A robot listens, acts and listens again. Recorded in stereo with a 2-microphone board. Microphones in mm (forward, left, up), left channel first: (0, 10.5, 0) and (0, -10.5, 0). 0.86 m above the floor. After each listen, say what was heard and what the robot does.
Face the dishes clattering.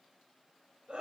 Keep listening.
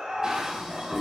The dishes clattering: about 40° right or 140° right. Turn 40° right.
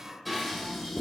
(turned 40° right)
Found it: dishes clattering, straight ahead, 2 to 4 m away.